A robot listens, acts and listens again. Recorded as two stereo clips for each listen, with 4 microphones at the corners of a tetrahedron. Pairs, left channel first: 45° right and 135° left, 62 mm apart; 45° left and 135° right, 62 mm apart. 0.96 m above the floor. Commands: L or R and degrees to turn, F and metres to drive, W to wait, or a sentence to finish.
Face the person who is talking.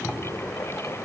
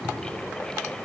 W
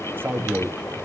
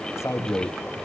L80
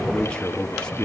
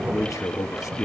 L30
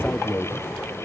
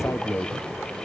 Found it: a man speaking, straight ahead, 1 to 2 m away.